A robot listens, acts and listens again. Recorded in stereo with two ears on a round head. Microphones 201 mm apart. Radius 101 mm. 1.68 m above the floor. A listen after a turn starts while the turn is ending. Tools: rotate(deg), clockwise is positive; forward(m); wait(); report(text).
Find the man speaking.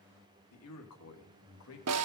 rotate(-70)
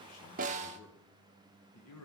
rotate(-80)
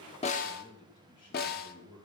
rotate(-25)
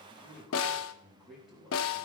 report("Facing the man speaking, 2 to 4 m away.")